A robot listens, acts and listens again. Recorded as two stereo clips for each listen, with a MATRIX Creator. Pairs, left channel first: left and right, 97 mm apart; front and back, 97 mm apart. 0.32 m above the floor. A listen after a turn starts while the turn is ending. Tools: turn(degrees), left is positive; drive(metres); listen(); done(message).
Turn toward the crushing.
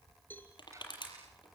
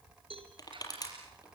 turn(degrees=50)
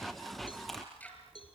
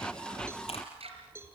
listen()
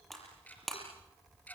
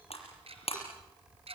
done("Facing the crushing, over 4 m away.")